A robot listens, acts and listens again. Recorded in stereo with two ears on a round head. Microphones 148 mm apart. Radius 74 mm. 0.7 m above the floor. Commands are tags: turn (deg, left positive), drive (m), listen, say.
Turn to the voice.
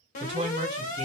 <turn deg="-40"/>
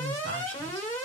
<turn deg="-100"/>
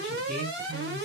<say>Facing the woman speaking.</say>